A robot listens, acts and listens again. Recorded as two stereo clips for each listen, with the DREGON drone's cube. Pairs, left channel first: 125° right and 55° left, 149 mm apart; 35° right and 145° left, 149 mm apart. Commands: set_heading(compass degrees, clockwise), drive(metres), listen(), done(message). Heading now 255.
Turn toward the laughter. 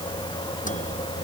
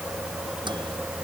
listen()
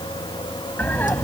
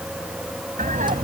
set_heading(95)
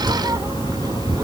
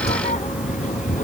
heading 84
set_heading(94)
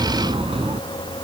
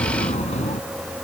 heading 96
done("Facing the laughter.")